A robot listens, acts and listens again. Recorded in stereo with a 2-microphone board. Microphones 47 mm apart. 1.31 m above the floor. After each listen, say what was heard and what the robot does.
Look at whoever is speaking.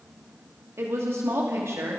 The woman speaking: about 70° right or 110° right. Turn 70° right.
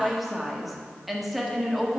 Found it: a woman speaking, straight ahead.